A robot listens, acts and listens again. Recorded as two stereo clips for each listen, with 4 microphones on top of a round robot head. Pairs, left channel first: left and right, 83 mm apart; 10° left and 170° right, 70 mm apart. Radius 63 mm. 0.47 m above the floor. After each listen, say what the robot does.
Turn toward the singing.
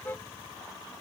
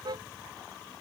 Keep listening.
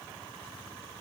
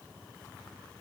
Keep listening.
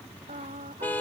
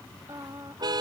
Turn 105° right.
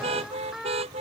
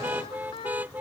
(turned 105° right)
Facing the singing.